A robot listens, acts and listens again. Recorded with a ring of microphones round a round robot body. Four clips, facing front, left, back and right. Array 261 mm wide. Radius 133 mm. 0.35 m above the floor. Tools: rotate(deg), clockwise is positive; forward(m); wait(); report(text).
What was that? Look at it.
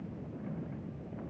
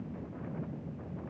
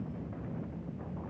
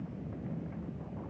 wait()
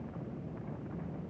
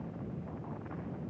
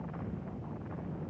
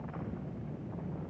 wait()
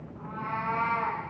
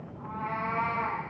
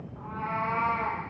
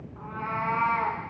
rotate(110)
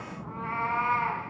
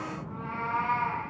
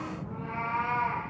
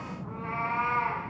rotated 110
rotate(20)
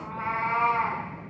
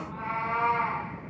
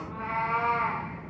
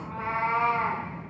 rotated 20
rotate(25)
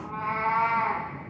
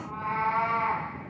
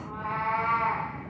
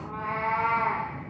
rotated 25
report("Found it: a cat meowing, straight ahead.")